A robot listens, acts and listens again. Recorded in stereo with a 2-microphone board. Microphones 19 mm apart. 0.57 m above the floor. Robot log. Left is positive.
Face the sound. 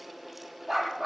cmd yaw +30
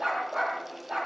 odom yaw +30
note: So it is at 25° right.
cmd yaw -25
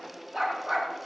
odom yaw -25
end: Found it: a dog barking, straight ahead.